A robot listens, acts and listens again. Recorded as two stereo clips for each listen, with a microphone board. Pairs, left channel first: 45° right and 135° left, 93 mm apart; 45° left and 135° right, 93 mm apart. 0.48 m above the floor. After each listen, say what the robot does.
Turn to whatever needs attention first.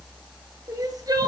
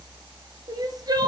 Turn 180° left.
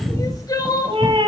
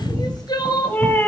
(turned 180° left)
Found it: crying, straight ahead.